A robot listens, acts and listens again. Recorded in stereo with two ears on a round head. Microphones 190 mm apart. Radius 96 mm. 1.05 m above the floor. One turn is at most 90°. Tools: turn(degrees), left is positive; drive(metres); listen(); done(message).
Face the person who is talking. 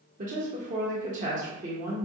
turn(degrees=-35)
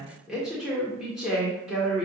done("Found it: a woman speaking, straight ahead, 1 to 2 m away.")